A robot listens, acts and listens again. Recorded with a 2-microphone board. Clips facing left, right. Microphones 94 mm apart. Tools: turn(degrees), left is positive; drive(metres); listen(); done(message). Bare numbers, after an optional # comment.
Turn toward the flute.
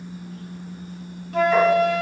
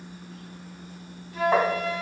turn(90)
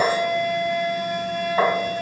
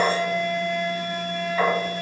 done("Found it: a flute, straight ahead, 1 to 2 m away.")